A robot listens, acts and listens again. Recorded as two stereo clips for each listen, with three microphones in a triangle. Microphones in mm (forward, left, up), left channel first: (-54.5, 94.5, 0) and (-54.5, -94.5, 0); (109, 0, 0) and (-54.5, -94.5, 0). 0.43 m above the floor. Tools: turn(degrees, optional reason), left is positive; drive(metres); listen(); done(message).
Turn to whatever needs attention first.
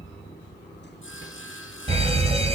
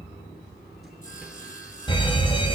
turn(degrees=-35, reason="The fire alarm: 35° right.")
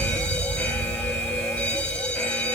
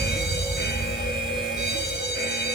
done("Found it: a fire alarm, straight ahead.")